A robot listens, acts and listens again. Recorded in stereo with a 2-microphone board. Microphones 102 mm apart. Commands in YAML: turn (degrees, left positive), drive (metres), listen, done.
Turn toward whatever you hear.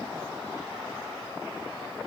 listen: true
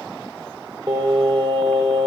turn: -45
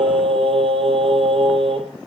turn: -90
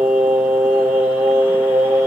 turn: -20
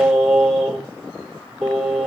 turn: -10
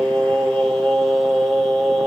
done: "Found it: singing, straight ahead."